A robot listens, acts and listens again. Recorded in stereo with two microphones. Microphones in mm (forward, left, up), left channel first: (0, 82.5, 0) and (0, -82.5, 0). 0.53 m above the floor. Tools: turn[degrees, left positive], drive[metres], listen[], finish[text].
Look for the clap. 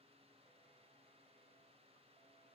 Action: listen[]
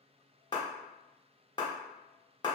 Thought: The clap: about 25° left or 155° left.
Action: turn[25]
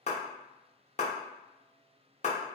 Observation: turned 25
Thought: So it is at 120° left.
Action: turn[120]
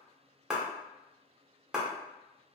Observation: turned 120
Action: finish[Facing the clap.]